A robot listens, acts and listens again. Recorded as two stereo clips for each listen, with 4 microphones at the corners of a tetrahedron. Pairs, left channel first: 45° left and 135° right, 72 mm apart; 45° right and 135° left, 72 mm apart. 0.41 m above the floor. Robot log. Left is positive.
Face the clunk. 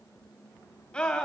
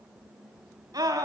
cmd idle
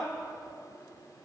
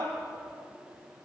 cmd idle
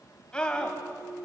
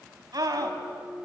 end: Found it: a clunk, straight ahead.